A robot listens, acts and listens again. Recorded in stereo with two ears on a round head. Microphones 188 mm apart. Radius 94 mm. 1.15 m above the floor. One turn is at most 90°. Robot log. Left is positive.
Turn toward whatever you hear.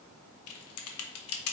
cmd yaw +90
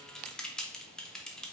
end: Found it: typing on a keyboard, straight ahead.